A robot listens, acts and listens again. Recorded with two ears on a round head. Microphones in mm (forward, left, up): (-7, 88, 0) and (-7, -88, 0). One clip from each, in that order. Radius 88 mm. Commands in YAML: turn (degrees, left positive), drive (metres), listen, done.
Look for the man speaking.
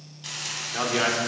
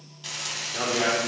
turn: 50
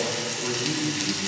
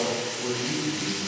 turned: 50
turn: 75
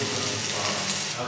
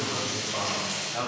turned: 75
turn: -10
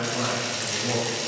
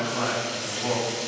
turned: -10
done: "Facing the man speaking, over 4 m away."